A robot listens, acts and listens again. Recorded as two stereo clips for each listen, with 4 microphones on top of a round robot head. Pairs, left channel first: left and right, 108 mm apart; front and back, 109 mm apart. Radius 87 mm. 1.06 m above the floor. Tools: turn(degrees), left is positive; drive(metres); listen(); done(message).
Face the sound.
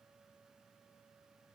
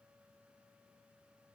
listen()
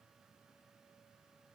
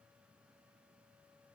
listen()
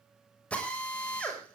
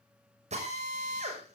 turn(degrees=170)
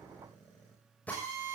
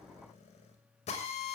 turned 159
turn(degrees=10)
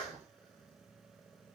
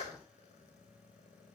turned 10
done("Facing the drill.")